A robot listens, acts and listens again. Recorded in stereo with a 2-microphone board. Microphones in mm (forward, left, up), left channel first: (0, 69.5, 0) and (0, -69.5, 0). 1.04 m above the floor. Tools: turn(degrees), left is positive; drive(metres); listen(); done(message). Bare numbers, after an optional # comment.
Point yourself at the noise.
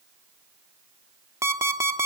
# The alarm clock: about 20° right or 160° right.
turn(-20)
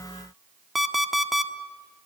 done("Facing the alarm clock, 1 to 2 m away.")